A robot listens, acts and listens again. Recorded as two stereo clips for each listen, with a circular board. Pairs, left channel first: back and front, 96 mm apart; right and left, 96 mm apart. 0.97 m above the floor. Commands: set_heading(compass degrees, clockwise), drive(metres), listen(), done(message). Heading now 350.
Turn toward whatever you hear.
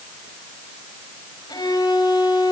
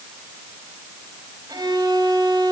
set_heading(215)
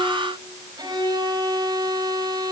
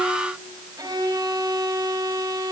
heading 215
set_heading(175)
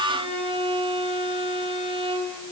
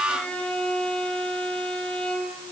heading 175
set_heading(185)
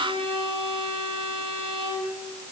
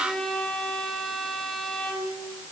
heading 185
done("Found it: a violin, straight ahead, over 4 m away.")